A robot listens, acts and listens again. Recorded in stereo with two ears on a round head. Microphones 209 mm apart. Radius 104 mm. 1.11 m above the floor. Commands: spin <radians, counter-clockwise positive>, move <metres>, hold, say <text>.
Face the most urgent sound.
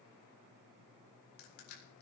hold
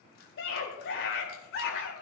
spin 0.96
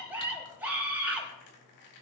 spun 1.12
say Found it: a scream, straight ahead, over 4 m away.